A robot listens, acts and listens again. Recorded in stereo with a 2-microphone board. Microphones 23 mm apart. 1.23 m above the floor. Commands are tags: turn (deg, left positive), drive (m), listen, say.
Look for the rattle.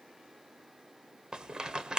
<turn deg="-35"/>
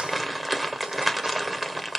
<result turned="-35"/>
<say>Facing the rattle.</say>